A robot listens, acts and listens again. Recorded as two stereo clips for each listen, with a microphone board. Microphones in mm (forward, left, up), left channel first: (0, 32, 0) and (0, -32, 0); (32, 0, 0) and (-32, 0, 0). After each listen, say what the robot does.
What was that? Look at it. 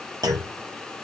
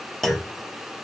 Turn 85° right.
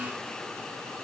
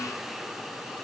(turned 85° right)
Facing where the clunk came from. I can't hear it now.